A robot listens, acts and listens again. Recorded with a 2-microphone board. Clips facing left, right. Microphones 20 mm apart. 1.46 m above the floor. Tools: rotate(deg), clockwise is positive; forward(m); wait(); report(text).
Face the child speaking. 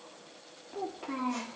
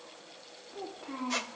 rotate(-30)
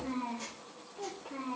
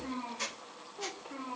rotate(15)
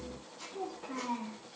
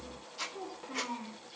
report("Facing the child speaking.")